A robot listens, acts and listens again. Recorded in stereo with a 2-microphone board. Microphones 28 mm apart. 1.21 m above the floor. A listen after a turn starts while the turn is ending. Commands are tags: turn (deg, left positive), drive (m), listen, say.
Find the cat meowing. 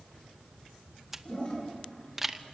<listen/>
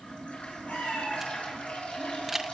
<turn deg="55"/>
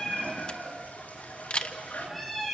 <say>Found it: a cat meowing, straight ahead.</say>